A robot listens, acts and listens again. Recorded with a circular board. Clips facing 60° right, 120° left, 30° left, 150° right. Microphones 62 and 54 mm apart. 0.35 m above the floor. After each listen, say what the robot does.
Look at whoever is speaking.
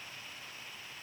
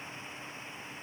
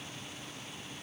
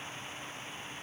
Keep listening.
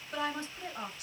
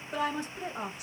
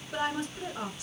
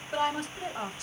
Turn 170° right.
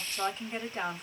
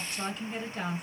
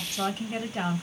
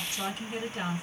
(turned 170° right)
Facing the woman speaking.